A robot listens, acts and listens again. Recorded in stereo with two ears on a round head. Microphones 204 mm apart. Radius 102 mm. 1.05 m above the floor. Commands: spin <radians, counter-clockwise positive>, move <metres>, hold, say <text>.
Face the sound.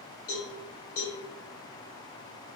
spin 1.22
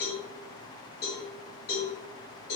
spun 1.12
spin 0.79
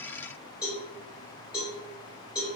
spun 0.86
say Found it: a cowbell, straight ahead.